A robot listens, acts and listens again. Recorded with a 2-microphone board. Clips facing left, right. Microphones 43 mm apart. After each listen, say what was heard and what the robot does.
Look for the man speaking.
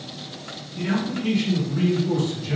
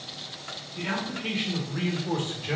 The man speaking: about 45° right or 135° right. Turn 45° right.
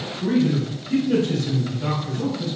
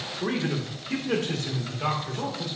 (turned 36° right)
The man speaking: about 45° right or 135° right. Turn 45° right.
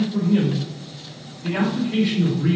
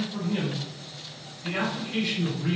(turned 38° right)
So it is at 10° left. Turn 10° left.
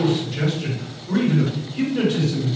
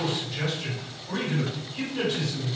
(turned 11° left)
Facing the man speaking.